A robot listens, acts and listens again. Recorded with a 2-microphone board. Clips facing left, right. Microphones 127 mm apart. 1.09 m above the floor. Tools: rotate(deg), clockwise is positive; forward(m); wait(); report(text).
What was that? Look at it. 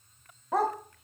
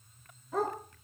rotate(-90)
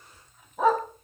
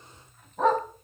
report("Facing the dog barking, 2 to 4 m away.")